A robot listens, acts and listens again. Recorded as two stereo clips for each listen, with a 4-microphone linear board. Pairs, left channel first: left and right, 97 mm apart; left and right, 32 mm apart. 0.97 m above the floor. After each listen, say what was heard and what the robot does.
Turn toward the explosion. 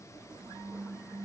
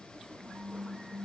Keep listening.
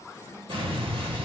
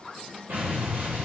The explosion: about 65° right or 115° right. Turn 65° right.
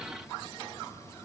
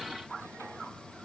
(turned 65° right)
Keep listening.
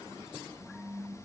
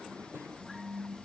I heard an explosion, but can't make it out now. It was about straight ahead or 50° right.